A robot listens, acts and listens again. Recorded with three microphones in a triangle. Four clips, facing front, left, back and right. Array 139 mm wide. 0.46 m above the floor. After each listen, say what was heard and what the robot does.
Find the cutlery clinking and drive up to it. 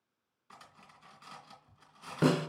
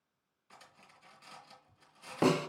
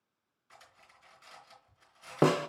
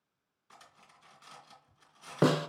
The cutlery clinking: 10° right. Turn 10° right.
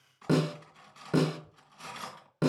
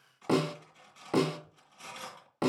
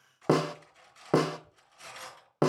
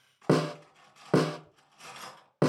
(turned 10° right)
Drive 1.0 m forward.
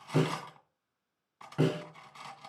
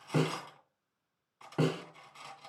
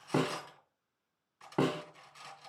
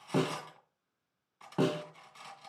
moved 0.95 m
Drive 1.0 m forward.
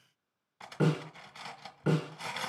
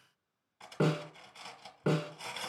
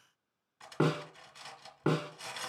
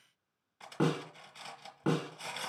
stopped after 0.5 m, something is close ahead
Arrived at the cutlery clinking, straight ahead.